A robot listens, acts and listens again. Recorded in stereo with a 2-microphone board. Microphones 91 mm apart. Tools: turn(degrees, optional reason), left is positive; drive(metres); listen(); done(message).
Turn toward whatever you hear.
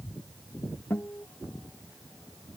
turn(degrees=20, reason="The guitar: about 20° left or 160° left.")
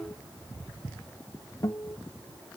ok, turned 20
turn(degrees=140, reason="So it is at 140° left.")
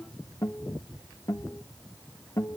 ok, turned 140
turn(degrees=45, reason="The guitar is now 45° left.")
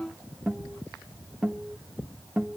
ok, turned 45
turn(degrees=-10, reason="The guitar is now 10° right.")
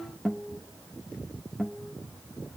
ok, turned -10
done("Found it: a guitar, straight ahead, 1 to 2 m away.")